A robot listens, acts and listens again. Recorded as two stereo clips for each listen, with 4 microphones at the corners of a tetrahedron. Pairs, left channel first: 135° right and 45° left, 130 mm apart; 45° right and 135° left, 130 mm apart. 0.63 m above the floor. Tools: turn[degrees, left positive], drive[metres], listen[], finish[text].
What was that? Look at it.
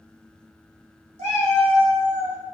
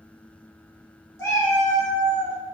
Thought: The cat meowing: 15° left.
Action: turn[15]
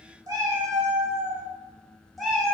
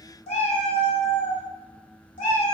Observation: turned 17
Thought: The cat meowing is now 50° right.
Action: turn[-50]
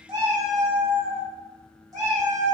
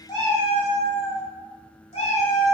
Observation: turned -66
Thought: The cat meowing is now 15° right.
Action: turn[-15]
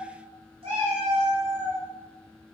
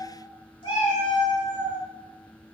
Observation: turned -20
Action: finish[Facing the cat meowing, 1 to 2 m away.]